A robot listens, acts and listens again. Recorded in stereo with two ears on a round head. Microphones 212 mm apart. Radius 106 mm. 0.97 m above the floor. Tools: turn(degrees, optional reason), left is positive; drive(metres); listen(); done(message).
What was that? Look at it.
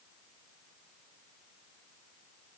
listen()
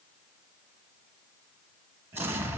turn(degrees=-30)
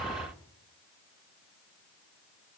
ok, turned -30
listen()
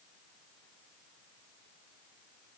done("I heard an explosion, but can't make it out now. It was about 20° left or 140° right.")